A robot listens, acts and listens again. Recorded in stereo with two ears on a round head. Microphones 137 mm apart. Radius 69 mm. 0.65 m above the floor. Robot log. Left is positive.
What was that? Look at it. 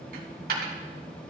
note: The dropped coin: about 65° right or 115° right.
cmd yaw -65
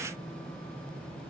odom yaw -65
cmd idle
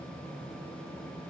end: I heard a dropped coin, but can't make it out now. It was about straight ahead or 50° right.